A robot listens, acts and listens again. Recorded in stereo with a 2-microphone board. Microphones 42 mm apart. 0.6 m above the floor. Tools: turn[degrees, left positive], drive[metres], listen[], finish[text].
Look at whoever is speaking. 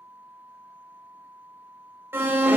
Action: listen[]
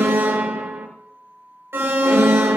Action: listen[]
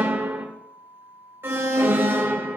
Action: finish[I can't make out anyone speaking to turn to.]